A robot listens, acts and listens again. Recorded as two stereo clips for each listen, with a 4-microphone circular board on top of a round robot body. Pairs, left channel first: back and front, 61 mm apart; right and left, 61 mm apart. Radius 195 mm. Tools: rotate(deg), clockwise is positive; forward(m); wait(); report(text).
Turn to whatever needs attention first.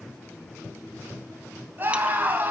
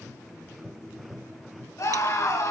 rotate(55)
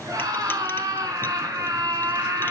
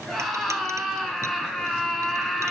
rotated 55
report("Found it: a scream, straight ahead, over 4 m away.")